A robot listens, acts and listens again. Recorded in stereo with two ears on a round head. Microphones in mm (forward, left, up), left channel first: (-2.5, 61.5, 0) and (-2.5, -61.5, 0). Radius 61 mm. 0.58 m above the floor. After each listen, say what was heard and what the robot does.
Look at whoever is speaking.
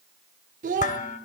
The child speaking: about 60° right or 120° right. Turn 60° right.
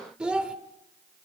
Facing the child speaking, 1 to 2 m away.